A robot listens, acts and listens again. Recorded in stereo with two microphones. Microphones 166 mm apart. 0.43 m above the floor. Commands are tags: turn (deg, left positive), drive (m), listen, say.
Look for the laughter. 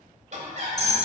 <turn deg="-45"/>
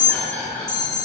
<turn deg="15"/>
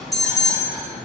<listen/>
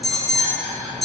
<turn deg="10"/>
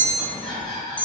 <say>Facing the laughter, 2 to 4 m away.</say>